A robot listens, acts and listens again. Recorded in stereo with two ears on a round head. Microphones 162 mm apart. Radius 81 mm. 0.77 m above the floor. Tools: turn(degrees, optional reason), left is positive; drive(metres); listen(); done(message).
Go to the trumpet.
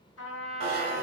turn(degrees=75, reason="The trumpet: about 75° left or 105° left.")
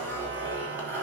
listen()
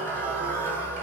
listen()
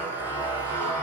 done("I heard a trumpet, but can't make it out now. It was about straight ahead or 30° left. I did not reach it.")